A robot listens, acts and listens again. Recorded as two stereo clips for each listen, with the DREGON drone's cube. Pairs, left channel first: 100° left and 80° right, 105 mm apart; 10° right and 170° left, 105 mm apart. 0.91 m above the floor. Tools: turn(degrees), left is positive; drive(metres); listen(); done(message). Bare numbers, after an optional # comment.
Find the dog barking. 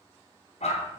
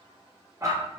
# The dog barking: 110° left.
turn(110)
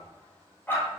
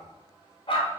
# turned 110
# The dog barking is now 30° left.
turn(30)
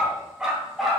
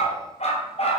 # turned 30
# The dog barking is now 10° left.
turn(10)
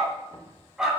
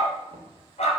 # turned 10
done("Found it: a dog barking, straight ahead, 2 to 4 m away.")